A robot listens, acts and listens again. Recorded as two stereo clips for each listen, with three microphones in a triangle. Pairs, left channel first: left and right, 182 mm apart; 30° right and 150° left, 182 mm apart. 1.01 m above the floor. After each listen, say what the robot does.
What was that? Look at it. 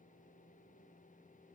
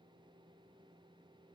Keep listening.
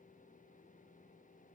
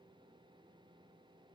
Keep listening.
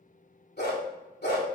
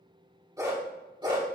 Turn 90° left.
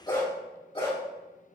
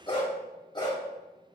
Turn 35° left.
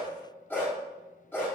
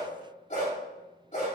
Turn 15° left.
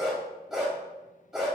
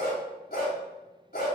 Facing the dog barking.